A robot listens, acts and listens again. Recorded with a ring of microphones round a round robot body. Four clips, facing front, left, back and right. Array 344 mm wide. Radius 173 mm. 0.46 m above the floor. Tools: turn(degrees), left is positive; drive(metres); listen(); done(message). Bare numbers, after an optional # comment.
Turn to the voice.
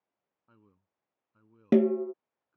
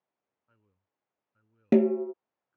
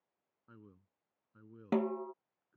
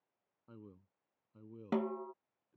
# The man speaking: 120° right.
turn(-120)
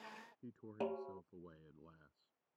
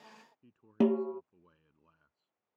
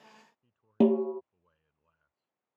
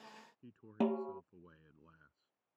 # The man speaking is now 20° right.
turn(-20)
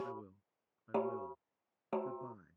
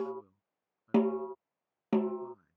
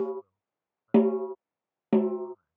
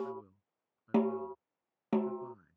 # The man speaking is now 10° right.
turn(-10)
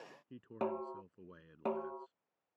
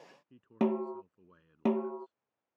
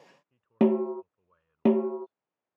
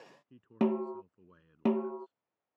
done("Facing the man speaking.")